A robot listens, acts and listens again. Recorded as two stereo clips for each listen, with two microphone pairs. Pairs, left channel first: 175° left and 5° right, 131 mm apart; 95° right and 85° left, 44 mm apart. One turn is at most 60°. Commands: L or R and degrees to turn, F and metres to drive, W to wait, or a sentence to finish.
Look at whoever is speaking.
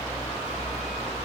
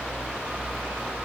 W
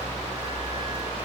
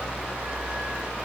W
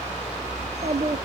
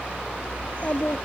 R35
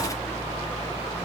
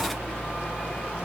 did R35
W
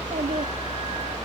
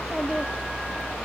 Facing the child speaking.